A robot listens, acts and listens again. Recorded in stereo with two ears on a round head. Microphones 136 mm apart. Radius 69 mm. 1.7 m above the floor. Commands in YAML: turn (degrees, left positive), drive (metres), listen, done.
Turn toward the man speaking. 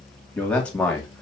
turn: 30
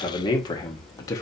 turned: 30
turn: 155
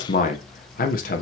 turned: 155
turn: 60
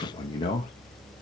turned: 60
turn: 30
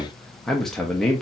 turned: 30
done: "Found it: a man speaking, straight ahead, 1 to 2 m away."